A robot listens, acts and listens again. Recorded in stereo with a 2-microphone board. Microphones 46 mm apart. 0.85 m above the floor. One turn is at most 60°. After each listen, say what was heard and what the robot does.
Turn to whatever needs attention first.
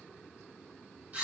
Keep listening.
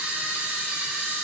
Keep listening.
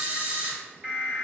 The alarm: about 25° right or 155° right. Turn 25° right.
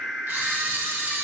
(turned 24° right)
Facing the alarm, 1 to 2 m away.